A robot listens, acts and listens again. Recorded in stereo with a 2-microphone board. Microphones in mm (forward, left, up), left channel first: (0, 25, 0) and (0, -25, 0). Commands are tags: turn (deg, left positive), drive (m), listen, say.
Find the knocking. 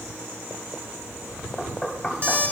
<turn deg="30"/>
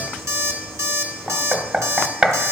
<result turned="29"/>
<turn deg="-30"/>
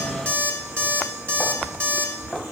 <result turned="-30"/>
<say>Found it: knocking, straight ahead.</say>